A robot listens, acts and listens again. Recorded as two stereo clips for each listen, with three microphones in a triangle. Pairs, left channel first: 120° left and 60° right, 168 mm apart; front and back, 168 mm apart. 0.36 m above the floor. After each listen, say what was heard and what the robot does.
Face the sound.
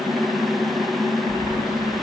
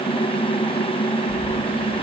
The keys jangling: 55° left. Turn 55° left.
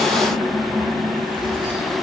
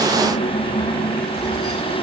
Facing the keys jangling, over 4 m away.